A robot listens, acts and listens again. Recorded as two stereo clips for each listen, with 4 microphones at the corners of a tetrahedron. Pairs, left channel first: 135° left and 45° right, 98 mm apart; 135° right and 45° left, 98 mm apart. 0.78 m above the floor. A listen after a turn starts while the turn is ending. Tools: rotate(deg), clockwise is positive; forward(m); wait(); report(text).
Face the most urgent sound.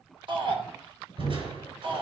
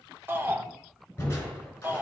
rotate(20)
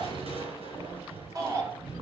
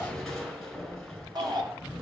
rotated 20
report("Found it: a shout, straight ahead.")